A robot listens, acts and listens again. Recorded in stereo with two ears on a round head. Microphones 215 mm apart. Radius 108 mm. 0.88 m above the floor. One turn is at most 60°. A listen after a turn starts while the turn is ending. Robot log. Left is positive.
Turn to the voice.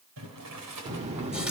note: The child speaking: about 25° right or 155° right.
cmd yaw -25
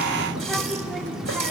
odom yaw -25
end: Facing the child speaking, 1 to 2 m away.